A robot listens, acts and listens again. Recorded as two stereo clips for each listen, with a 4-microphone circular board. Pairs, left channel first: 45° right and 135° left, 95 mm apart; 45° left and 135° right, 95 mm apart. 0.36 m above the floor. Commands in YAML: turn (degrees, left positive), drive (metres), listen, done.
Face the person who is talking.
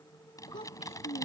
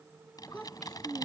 turn: -40
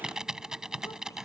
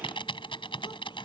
listen: true
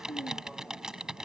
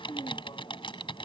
turn: 10
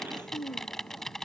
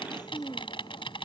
done: "Found it: a child speaking, straight ahead."